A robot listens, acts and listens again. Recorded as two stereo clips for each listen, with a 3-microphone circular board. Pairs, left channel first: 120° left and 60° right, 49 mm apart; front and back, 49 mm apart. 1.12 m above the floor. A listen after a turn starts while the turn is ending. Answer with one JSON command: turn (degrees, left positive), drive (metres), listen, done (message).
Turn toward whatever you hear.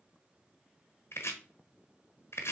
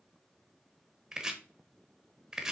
{"turn": 100}
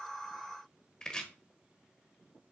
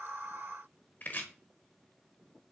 {"turn": 45}
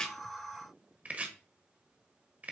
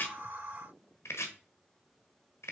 {"done": "Facing the chopping."}